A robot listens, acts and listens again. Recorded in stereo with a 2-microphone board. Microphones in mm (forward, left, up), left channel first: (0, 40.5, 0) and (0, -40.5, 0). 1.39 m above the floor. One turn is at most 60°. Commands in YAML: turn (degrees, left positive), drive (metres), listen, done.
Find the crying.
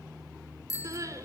turn: -40
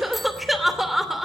done: "Found it: crying, straight ahead, 2 to 4 m away."